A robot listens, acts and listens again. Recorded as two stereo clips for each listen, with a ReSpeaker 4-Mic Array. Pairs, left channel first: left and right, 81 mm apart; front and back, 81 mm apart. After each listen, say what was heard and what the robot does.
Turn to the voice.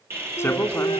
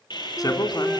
The man speaking: 35° left. Turn 35° left.
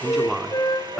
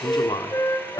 Facing the man speaking.